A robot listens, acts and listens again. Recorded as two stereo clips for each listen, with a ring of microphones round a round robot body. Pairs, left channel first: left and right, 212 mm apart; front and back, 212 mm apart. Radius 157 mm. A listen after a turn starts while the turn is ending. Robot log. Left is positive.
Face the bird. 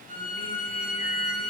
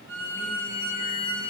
cmd idle
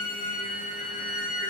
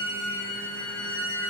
cmd idle
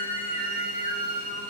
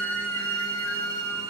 end: I can't make out a bird, only a violin.